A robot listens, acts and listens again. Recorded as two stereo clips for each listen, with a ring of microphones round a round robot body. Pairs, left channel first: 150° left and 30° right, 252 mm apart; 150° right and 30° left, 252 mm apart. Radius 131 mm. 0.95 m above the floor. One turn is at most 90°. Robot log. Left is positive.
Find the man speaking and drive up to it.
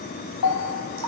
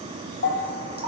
cmd idle
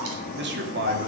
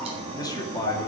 note: The man speaking: 75° right.
cmd yaw -75
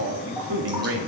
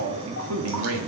cmd fwd 1.0
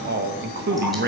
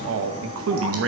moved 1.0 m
note: The man speaking is now 15° left.
cmd yaw +15
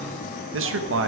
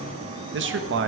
cmd fwd 1.0
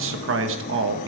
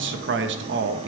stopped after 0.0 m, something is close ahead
end: I am next to the man speaking.